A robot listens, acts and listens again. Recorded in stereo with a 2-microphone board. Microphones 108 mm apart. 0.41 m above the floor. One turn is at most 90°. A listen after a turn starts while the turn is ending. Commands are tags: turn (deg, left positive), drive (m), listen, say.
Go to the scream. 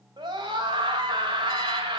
<turn deg="-45"/>
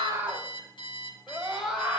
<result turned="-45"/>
<drive m="1.0"/>
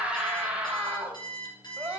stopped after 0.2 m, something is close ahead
<turn deg="-10"/>
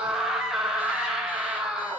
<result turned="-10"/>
<say>Something is in my way. I am facing the scream but have not reached it.</say>